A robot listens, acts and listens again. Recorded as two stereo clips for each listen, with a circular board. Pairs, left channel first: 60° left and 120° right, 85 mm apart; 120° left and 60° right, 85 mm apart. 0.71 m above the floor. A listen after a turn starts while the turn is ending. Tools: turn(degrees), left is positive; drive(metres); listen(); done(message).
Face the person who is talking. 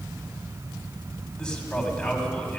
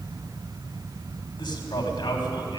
turn(degrees=135)
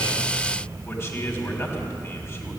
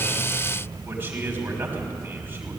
done("Facing the man speaking.")